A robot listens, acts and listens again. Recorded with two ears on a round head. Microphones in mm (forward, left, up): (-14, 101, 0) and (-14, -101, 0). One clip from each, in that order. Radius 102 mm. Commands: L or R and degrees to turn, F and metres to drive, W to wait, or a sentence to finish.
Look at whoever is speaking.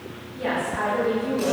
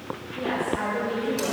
L35
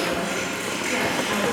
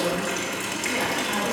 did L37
W
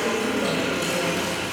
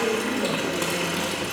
L30
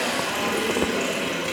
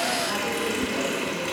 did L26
W
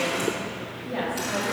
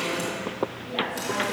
L50
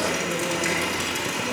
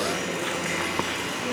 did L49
W
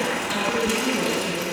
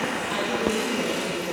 Facing the woman speaking, 2 to 4 m away.